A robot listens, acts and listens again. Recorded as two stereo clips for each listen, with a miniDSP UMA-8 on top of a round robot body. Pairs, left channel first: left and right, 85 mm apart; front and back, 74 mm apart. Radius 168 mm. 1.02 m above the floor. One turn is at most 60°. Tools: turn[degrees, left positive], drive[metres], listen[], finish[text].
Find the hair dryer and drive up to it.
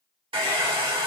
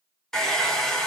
Thought: The hair dryer: 80° right.
Action: turn[-60]
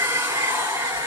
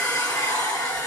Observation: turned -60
Thought: The hair dryer is now 35° right.
Action: turn[-35]
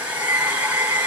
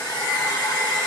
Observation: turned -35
Thought: The hair dryer is now 15° right.
Action: turn[-15]
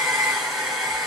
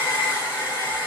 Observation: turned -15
Action: drive[1.0]
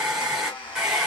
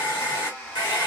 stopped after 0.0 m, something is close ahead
Action: finish[Blocked. The hair dryer is further on, straight ahead.]